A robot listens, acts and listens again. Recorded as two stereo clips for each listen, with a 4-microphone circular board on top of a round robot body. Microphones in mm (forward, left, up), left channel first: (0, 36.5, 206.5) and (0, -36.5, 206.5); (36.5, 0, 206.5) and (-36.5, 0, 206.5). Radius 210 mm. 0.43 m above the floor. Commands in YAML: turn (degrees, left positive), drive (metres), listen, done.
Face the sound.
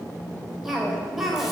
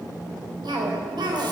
turn: -175
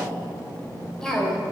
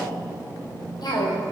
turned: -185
turn: 10
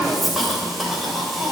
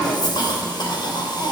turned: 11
done: "Facing the cough, 2 to 4 m away."